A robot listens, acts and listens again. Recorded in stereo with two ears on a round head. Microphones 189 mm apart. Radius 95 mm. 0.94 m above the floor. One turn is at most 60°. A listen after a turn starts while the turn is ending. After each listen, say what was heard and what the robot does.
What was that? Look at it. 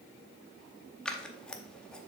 Turn 30° left.
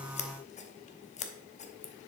So it is at 145° left. Turn 60° left.
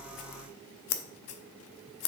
The scissors is now 105° left. Turn 60° left.
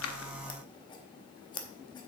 The scissors is now 20° left. Turn 20° left.
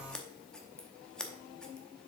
Found it: scissors, straight ahead.